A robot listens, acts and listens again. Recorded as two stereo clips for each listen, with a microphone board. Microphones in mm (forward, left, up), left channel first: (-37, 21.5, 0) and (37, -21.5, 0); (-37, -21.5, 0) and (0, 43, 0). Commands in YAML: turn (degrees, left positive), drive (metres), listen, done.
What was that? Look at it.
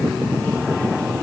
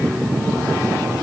listen: true
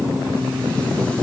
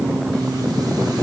listen: true
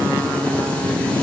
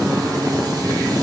done: "I can't make out anything."